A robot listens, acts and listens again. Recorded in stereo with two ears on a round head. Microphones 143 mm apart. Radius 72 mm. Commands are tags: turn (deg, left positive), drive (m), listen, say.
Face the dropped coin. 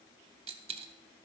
<turn deg="-40"/>
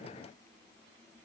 <listen/>
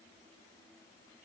<say>I heard a dropped coin, but can't make it out now. It was about straight ahead or 100° right.</say>